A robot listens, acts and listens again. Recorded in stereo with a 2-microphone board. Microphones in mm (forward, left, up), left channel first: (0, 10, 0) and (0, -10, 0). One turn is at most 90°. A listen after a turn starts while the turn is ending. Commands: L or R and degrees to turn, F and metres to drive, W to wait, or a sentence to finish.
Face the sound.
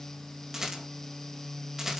R25
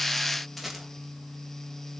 Found it: a rattle, straight ahead.